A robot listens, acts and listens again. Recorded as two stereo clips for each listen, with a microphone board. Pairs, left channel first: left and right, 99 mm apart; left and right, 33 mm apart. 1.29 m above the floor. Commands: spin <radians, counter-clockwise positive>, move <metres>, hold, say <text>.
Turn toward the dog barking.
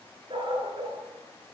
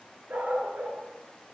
spin -0.87
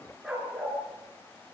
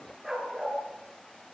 say Facing the dog barking, over 4 m away.